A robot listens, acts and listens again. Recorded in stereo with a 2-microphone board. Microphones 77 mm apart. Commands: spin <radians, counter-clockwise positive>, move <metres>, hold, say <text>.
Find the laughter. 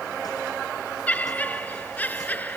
spin 0.35
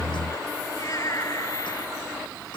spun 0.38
spin 2.36
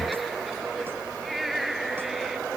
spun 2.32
say Facing the laughter.